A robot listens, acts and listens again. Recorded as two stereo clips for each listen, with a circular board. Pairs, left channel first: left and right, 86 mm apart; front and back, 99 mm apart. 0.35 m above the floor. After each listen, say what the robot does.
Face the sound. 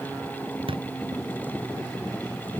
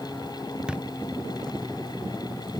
Turn 100° right.
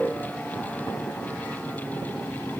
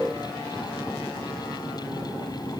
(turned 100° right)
I heard a thud from this way, but can't make it out now.